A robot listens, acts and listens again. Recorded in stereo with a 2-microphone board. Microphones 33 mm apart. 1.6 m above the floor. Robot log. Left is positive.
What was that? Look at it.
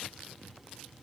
cmd idle
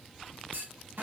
cmd yaw -90
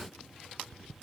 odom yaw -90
end: Facing where the clunk came from. I can't hear it now.